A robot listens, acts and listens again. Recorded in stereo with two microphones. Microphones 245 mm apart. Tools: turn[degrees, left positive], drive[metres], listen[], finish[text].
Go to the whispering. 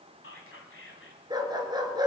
Thought: The whispering: about 55° left or 125° left.
Action: turn[55]
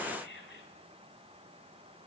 Thought: So it is at 55° left.
Action: turn[55]
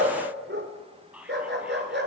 Action: drive[1.0]
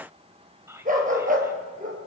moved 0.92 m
Thought: The whispering is now 15° right.
Action: turn[-15]
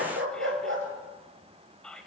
Action: drive[1.0]
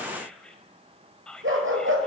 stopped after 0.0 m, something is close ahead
Action: finish[I am next to the whispering.]